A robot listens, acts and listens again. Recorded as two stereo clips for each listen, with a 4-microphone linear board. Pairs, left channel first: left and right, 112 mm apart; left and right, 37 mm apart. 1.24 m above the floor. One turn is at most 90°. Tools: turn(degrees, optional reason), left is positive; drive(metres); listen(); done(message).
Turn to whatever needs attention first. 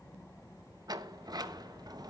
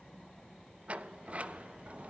listen()
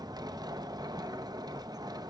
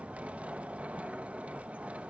listen()
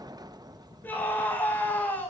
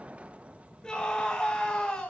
turn(degrees=15, reason="The scream: about 15° left or 165° left.")
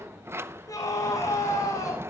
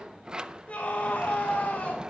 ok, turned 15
turn(degrees=90, reason="So it is at 150° left.")
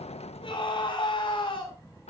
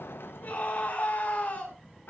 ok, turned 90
turn(degrees=50, reason="The scream is now 50° left.")
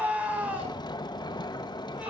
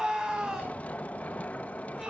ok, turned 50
turn(degrees=-10, reason="The scream is now 10° right.")
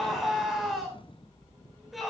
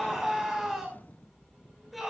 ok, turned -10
done("Found it: a scream, straight ahead.")